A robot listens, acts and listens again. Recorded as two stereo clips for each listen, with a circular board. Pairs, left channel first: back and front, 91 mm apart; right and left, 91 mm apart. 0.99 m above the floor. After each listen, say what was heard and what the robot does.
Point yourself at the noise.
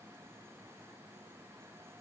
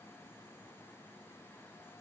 Keep listening.
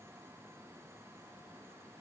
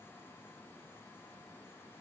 Keep listening.
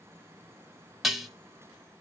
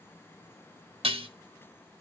The dishes clattering: 90° left. Turn 90° left.
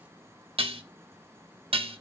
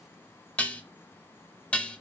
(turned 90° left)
The dishes clattering is now 15° right. Turn 15° right.
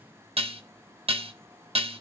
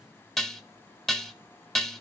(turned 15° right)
Facing the dishes clattering.